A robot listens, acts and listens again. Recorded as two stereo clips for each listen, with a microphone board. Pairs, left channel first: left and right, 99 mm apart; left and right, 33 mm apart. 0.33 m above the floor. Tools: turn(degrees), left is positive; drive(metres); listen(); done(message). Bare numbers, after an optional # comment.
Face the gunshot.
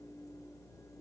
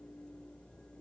listen()
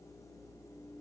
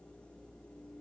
listen()
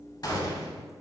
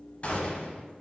# The gunshot: about 40° left or 140° left.
turn(40)
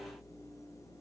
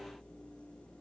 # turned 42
listen()
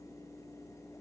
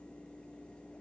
done("I heard a gunshot, but can't make it out now. It was about straight ahead or 95° left.")